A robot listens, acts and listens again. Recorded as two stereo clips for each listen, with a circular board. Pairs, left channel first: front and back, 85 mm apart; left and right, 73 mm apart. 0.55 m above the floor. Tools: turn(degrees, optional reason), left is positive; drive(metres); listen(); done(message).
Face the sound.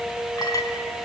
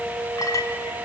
turn(degrees=45, reason="The clink: 45° left.")
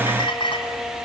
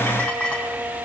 turn(degrees=15, reason="The clink is now 15° left.")
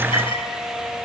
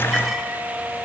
listen()
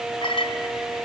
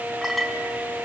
done("Found it: a clink, straight ahead, 2 to 4 m away.")